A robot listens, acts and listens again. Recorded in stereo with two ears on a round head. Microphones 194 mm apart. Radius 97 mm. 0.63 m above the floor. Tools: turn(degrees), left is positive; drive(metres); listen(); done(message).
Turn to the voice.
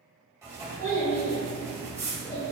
turn(degrees=30)
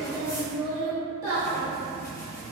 turn(degrees=-15)
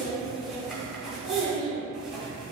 done("Facing the child speaking.")